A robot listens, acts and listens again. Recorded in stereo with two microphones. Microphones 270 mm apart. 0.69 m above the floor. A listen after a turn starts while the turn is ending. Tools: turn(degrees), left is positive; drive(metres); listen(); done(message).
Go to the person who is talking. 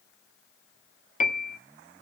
listen()
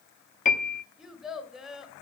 turn(degrees=30)
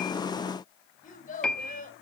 turn(degrees=150)
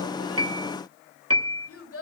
turn(degrees=55)
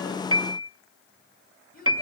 turn(degrees=35)
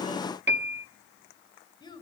turn(degrees=15)
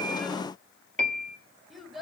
drive(metres=1.0)
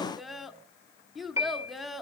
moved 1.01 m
drive(metres=1.0)
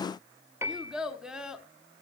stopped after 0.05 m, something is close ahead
done("I am next to the child speaking.")